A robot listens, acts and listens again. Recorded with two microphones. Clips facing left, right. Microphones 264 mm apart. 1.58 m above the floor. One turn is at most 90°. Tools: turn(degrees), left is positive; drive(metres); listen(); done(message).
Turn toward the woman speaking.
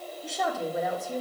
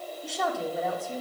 turn(degrees=30)
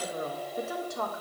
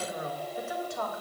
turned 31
turn(degrees=90)
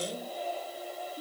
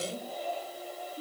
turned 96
turn(degrees=25)
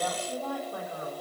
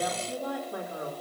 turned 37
turn(degrees=-25)
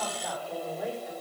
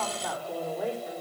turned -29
done("Facing the woman speaking, over 4 m away.")